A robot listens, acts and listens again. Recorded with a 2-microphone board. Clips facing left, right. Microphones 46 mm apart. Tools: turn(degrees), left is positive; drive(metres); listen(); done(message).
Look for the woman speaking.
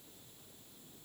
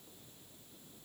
listen()
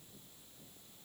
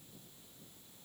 listen()
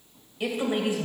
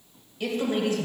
turn(degrees=25)
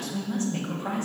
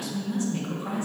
turn(degrees=125)
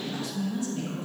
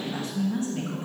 turn(degrees=-40)
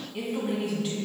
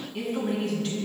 done("Found it: a woman speaking, straight ahead.")